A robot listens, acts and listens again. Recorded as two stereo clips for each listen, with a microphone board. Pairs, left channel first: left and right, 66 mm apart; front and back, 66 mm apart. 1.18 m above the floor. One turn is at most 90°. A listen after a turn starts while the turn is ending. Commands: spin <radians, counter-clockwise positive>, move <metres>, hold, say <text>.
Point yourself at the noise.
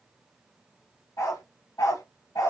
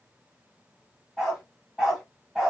spin 1.57
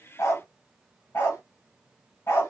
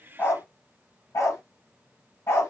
spin 0.79
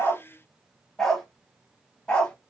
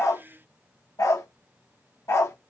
spin 0.35
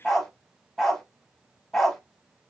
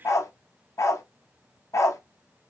spin 0.17
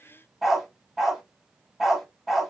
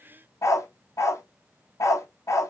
say Facing the dog barking, 1 to 2 m away.